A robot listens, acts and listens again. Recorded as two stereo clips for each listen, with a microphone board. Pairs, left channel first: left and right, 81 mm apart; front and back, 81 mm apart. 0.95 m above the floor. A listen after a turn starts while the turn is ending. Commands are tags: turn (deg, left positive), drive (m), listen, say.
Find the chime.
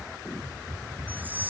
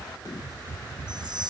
<turn deg="-160"/>
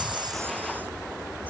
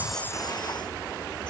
<listen/>
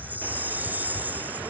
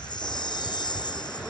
<turn deg="-25"/>
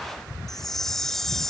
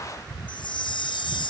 <say>Found it: a chime, straight ahead.</say>